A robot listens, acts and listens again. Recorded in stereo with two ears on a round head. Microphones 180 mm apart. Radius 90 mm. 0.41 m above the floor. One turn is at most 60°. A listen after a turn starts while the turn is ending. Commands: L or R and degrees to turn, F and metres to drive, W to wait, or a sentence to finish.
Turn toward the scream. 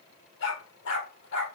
W
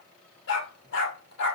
W
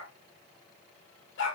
I can't make out a scream to turn to.